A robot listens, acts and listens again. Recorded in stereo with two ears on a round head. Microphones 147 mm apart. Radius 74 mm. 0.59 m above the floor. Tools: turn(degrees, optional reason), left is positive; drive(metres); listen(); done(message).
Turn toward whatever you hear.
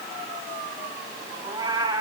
turn(degrees=-25, reason="The cat meowing: about 25° right or 155° right.")
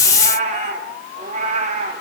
turn(degrees=-135, reason="So it is at 135° right.")
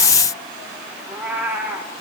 turn(degrees=-10, reason="The cat meowing is now 10° right.")
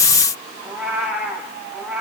done("Facing the cat meowing, over 4 m away.")